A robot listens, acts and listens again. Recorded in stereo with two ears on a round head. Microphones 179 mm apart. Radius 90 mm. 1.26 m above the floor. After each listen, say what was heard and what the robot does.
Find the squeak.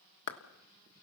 Keep listening.
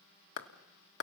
Keep listening.
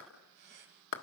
The squeak: about 55° right or 125° right. Turn 55° right.
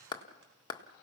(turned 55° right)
Keep listening.
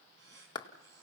So it is at 70° right. Turn 70° right.
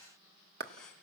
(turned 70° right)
Facing the squeak.